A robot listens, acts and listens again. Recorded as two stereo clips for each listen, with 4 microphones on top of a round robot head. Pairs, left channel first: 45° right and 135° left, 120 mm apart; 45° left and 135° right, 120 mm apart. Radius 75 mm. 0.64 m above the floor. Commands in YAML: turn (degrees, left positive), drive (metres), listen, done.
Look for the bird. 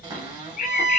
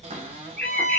turn: -35
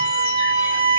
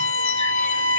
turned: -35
listen: true
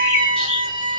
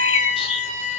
done: "Facing the bird, under 1 m away."